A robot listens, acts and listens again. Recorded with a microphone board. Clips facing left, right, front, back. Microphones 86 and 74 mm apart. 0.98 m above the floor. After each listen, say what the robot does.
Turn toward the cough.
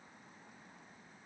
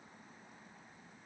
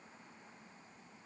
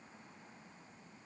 Keep listening.
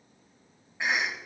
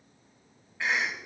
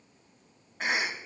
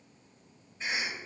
Turn 20° left.
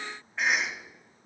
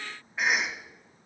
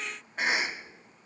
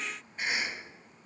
Facing the cough, 1 to 2 m away.